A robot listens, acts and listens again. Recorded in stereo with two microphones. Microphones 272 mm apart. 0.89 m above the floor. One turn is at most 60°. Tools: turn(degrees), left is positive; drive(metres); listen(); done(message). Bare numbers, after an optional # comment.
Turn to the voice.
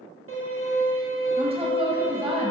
# The woman speaking: about 20° right or 160° right.
turn(-20)
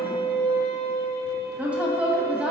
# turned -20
done("Facing the woman speaking, 1 to 2 m away.")